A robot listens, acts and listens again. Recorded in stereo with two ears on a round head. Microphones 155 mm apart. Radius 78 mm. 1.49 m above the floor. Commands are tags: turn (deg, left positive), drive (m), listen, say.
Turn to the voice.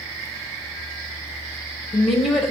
<turn deg="30"/>
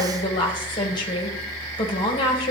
<turn deg="155"/>
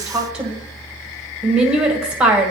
<say>Found it: a woman speaking, straight ahead, 1 to 2 m away.</say>